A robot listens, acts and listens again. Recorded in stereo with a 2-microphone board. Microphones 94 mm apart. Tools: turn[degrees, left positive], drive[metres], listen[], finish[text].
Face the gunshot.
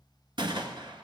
Thought: The gunshot: about 55° right or 125° right.
Action: turn[-55]
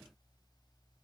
Action: listen[]
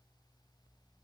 Action: finish[I heard a gunshot, but can't make it out now. It was about straight ahead or 70° right.]